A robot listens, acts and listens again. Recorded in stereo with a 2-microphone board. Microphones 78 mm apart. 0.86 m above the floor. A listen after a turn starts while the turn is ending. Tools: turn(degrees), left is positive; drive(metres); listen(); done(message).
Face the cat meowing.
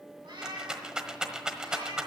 turn(degrees=-90)
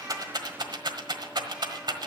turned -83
listen()
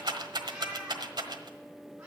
turn(degrees=-15)
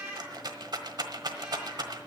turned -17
listen()
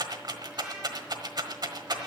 listen()
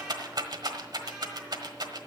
done("Facing where the cat meowing came from. I can't hear it now.")